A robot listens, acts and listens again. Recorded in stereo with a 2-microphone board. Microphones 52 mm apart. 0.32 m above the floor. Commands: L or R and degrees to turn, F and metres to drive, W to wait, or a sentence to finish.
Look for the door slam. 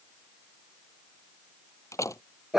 L90
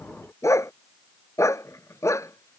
I heard a door slam from this way, but can't make it out now.